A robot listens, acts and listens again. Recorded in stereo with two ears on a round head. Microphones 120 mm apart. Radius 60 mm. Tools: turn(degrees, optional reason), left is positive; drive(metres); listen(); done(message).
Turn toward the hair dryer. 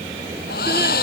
turn(degrees=70, reason="The hair dryer: about 70° left or 110° left.")
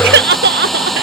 done("Found it: a hair dryer, straight ahead.")